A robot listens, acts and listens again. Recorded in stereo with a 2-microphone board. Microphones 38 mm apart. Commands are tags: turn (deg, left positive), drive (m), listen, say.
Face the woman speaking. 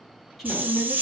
<turn deg="30"/>
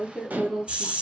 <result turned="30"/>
<turn deg="-35"/>
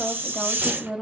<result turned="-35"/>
<turn deg="-20"/>
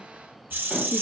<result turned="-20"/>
<listen/>
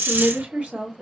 <turn deg="-45"/>
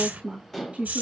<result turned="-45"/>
<turn deg="-35"/>
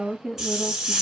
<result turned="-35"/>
<say>Found it: a woman speaking, straight ahead, 1 to 2 m away.</say>